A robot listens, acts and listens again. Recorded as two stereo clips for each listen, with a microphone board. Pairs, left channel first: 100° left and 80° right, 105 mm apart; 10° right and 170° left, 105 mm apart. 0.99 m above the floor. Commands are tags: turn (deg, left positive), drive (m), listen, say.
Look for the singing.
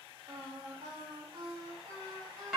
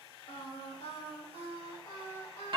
<turn deg="-20"/>
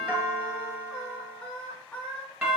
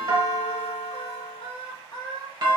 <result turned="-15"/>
<turn deg="30"/>
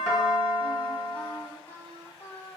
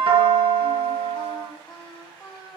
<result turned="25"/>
<turn deg="35"/>
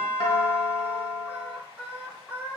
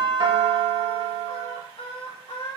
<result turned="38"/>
<say>Facing the singing.</say>